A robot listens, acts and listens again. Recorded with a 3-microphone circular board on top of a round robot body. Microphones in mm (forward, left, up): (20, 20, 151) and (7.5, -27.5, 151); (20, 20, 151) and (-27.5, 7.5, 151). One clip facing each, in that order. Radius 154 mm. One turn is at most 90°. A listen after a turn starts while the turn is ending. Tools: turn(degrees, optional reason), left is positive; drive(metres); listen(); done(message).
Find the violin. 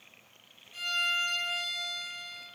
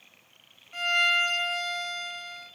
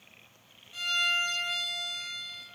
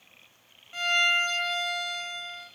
turn(degrees=-90, reason="The violin: 125° right.")
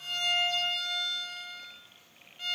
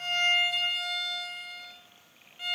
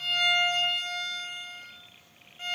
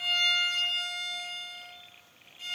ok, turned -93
turn(degrees=-30, reason="The violin is now 30° right.")
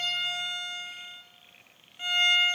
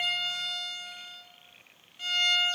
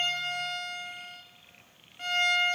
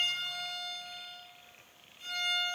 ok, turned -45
turn(degrees=10, reason="The violin is now 10° left.")
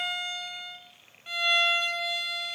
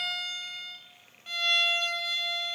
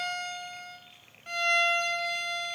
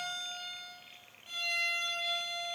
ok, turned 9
done("Facing the violin, 1 to 2 m away.")